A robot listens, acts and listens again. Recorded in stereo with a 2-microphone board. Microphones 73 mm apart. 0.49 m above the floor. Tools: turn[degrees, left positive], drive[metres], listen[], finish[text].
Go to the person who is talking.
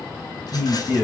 Action: turn[-30]
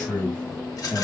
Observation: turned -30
Thought: So it is at 15° left.
Action: turn[15]
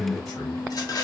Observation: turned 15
Action: drive[1.0]
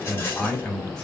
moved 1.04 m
Thought: The man speaking is now 15° left.
Action: turn[15]
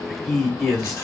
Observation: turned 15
Action: drive[1.0]
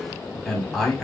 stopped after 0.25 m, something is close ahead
Action: finish[Arrived at the man speaking, straight ahead.]